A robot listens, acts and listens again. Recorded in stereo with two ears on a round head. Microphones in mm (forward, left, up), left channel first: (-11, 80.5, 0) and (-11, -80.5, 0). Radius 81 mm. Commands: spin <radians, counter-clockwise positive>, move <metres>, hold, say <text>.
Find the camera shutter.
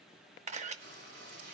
spin -0.70
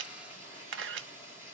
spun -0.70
spin -1.75
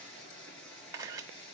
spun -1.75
spin -0.35
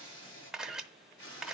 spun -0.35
say Found it: a camera shutter, straight ahead.